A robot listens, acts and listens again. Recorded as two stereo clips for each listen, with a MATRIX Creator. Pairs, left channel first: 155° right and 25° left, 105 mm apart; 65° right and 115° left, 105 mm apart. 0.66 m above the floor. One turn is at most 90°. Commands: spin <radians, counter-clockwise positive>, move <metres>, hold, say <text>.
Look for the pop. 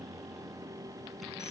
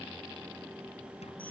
hold
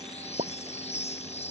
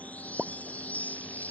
spin 0.61
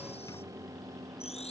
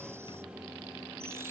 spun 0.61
say I heard a pop from this way, but can't make it out now.